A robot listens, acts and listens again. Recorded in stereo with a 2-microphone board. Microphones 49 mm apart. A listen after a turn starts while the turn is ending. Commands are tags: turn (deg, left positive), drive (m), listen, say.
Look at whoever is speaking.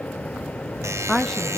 <turn deg="30"/>
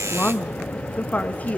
<turn deg="150"/>
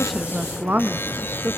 <turn deg="-45"/>
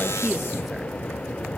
<listen/>
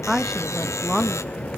<say>Facing the woman speaking, 1 to 2 m away.</say>